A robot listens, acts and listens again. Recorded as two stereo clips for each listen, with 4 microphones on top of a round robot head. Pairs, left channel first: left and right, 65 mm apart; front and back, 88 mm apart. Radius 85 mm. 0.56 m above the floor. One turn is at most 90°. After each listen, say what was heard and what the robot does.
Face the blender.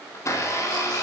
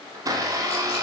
The blender: 130° left. Turn 90° left.
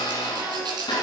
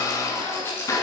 The blender is now 55° left. Turn 55° left.
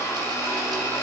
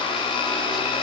The blender is now 25° left. Turn 25° left.
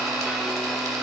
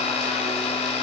Facing the blender, 1 to 2 m away.